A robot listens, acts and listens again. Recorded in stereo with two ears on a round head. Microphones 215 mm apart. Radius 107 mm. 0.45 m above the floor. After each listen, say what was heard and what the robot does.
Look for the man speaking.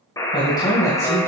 Turn 30° left.
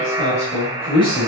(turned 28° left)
The man speaking: about 20° left or 160° left. Turn 20° left.
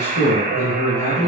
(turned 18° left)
The man speaking: about 25° left or 155° left. Turn 25° left.
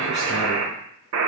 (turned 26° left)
Keep listening.
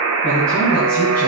So it is at 140° left. Turn 140° left.
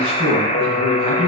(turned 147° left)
Facing the man speaking, 2 to 4 m away.